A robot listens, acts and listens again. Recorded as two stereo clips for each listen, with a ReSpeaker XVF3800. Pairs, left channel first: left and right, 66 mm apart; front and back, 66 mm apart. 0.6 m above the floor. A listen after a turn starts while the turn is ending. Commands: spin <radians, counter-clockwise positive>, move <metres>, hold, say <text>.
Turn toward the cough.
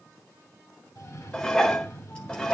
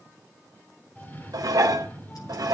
spin 1.05
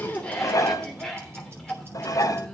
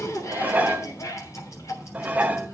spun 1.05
say Found it: a cough, straight ahead, 2 to 4 m away.